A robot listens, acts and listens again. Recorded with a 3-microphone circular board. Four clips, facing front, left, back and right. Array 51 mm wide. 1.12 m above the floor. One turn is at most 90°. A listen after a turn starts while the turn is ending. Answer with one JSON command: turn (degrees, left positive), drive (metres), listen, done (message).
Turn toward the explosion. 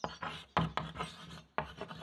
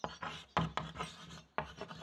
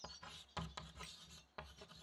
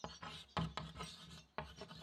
{"listen": true}
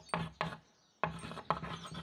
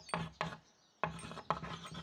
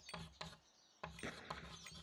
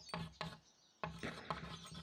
{"turn": -90}
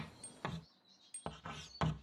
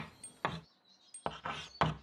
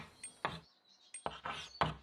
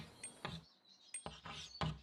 {"turn": -30}
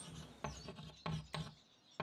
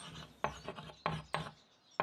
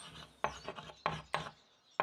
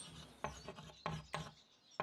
{"done": "Facing where the explosion came from. I can't hear it now."}